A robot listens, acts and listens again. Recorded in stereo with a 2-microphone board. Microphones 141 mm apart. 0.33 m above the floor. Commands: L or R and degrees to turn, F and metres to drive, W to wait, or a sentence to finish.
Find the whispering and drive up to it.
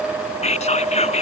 L50
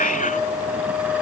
L75
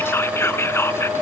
L20
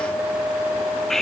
F1.0
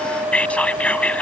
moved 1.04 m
L10
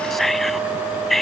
F1.0
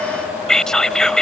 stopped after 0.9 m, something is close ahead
Arrived at the whispering, straight ahead.